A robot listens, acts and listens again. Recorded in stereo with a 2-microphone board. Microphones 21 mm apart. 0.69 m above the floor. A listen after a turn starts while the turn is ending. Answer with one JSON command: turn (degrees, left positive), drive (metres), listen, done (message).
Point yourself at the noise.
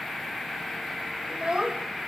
{"turn": -45}
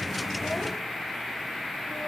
{"listen": true}
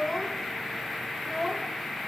{"done": "Facing the child speaking, 1 to 2 m away."}